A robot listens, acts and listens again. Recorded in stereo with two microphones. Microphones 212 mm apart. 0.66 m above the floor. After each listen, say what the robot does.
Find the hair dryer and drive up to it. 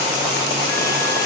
Keep listening.
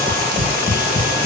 Keep listening.
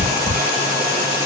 I can't make out a hair dryer to turn to.